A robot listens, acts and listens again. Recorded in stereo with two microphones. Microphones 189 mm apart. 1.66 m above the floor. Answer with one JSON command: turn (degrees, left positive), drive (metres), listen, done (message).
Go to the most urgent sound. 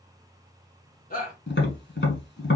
{"turn": 45}
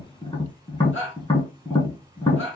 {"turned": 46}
{"turn": 90}
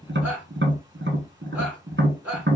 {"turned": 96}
{"turn": -10}
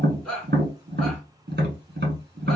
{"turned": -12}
{"drive": 1.0}
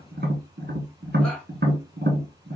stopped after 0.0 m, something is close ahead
{"listen": true}
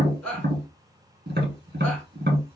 {"done": "Something is in my way. I am facing the shout but have not reached it."}